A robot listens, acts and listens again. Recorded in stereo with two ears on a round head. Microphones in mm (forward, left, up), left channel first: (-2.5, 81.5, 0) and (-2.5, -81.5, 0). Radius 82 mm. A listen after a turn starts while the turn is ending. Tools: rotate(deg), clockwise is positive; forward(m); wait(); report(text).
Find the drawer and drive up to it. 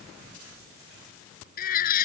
wait()
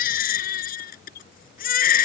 wait()
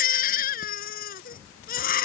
report("I can't make out a drawer to turn to.")